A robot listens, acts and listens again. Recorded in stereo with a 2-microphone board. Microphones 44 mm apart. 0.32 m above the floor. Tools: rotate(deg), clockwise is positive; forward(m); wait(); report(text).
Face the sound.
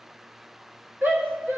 rotate(45)
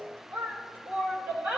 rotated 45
rotate(90)
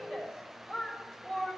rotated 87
report("Facing the shout.")